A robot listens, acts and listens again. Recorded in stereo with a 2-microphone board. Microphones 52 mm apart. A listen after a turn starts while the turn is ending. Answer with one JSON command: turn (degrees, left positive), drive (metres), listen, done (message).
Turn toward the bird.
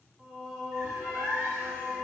{"turn": -60}
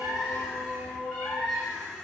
{"done": "Facing the bird."}